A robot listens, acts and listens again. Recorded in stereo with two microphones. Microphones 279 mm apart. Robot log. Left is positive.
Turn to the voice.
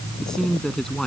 cmd yaw +30
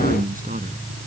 cmd idle
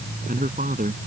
note: So it is at 30° right.
cmd yaw -30
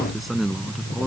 end: Found it: a man speaking, straight ahead.